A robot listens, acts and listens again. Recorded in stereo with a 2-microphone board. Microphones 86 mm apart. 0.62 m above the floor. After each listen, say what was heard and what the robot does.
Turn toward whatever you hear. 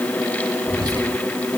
The whispering: about 45° right or 135° right. Turn 45° right.
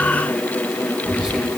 So it is at 10° right. Turn 10° right.
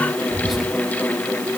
Found it: whispering, straight ahead, 2 to 4 m away.